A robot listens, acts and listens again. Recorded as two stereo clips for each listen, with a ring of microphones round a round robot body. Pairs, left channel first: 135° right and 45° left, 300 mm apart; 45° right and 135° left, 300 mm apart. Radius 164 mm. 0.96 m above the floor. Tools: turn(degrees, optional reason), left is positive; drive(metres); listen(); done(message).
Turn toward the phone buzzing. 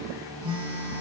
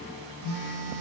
turn(degrees=120, reason="The phone buzzing: 120° left.")
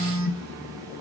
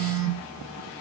done("Facing the phone buzzing, 1 to 2 m away.")